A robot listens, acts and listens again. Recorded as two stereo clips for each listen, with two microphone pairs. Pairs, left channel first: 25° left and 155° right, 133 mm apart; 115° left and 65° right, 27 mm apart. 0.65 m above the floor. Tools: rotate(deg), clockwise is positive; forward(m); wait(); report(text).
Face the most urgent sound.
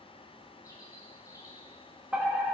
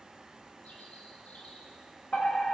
rotate(-125)
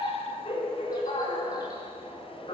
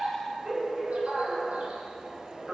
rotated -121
report("Found it: a fire alarm, straight ahead.")